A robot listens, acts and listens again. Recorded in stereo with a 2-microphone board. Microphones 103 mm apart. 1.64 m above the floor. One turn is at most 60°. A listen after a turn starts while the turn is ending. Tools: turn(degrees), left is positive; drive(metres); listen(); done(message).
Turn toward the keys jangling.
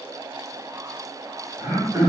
listen()
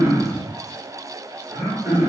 listen()
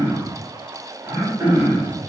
done("I can't make out keys jangling, only throat clearing.")